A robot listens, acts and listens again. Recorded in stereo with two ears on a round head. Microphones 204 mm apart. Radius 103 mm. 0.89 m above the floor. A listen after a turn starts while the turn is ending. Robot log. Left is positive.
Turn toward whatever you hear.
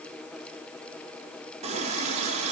note: The running tap: about 30° right or 150° right.
cmd yaw -30
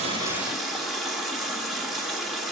end: Facing the running tap.